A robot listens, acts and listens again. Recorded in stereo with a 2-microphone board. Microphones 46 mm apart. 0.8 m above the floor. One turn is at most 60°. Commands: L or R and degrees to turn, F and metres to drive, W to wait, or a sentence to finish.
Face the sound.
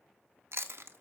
R60
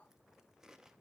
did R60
W
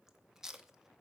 R10
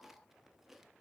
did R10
W
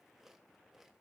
W
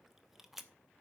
Found it: chewing, straight ahead, under 1 m away.